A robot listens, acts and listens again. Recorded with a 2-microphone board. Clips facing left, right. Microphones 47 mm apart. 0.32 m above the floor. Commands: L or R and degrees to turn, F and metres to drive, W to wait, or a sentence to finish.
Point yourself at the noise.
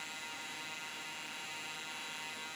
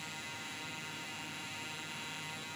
W
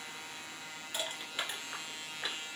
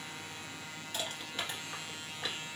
L30
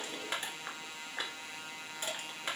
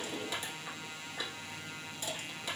L135
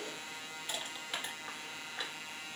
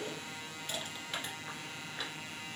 L10
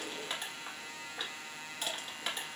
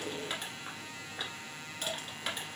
Found it: crushing, straight ahead.